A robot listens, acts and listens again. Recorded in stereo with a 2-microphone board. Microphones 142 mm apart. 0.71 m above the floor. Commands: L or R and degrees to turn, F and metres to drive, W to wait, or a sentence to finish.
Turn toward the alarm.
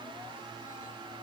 W
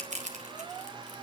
W
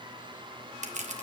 I can't make out an alarm, only crushing.